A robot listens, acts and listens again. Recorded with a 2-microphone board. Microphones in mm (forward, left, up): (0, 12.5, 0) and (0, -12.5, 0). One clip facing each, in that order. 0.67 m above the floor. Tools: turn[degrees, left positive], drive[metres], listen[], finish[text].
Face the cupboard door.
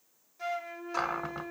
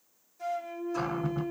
Thought: The cupboard door: about 55° left or 125° left.
Action: turn[55]
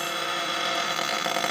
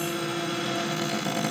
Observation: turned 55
Thought: So it is at 70° left.
Action: turn[70]
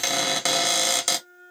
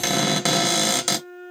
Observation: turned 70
Action: finish[Facing the cupboard door, 1 to 2 m away.]